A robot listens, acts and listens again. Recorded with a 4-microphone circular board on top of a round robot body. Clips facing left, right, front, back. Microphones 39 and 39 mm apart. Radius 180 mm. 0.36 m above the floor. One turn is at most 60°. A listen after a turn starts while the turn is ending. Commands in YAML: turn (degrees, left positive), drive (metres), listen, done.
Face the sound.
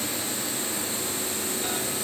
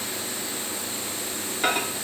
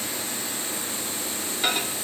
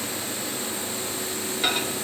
turn: -60
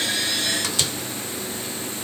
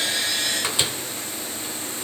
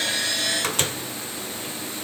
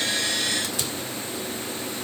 turn: -25
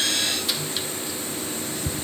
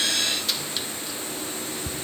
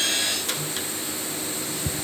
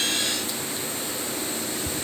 done: "Found it: a microwave, straight ahead."